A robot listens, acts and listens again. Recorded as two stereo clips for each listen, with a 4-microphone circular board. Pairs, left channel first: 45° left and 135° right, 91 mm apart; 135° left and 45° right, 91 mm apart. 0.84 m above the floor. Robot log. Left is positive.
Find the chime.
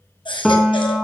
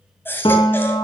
cmd idle
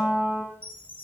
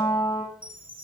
note: The chime: 30° right.
cmd yaw -30
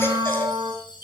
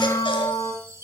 note: The chime is now 10° left.
cmd yaw +10
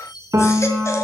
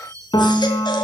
end: Found it: a chime, straight ahead, 2 to 4 m away.